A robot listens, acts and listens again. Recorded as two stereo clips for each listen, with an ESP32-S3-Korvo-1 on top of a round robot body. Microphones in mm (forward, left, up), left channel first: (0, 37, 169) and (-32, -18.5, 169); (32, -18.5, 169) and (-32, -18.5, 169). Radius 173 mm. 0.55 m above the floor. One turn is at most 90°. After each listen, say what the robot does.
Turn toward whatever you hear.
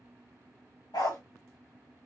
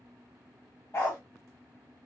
Turn 55° left.
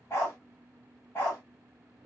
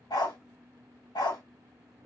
Facing the dog barking.